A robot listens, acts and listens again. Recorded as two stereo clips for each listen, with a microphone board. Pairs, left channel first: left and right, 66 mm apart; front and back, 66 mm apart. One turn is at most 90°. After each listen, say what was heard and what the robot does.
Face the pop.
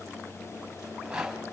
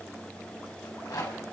Keep listening.
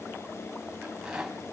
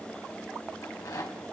Keep listening.
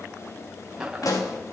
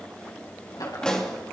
The pop: 80° left. Turn 80° left.
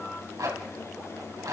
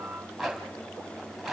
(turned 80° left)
Facing where the pop came from. I can't hear it now.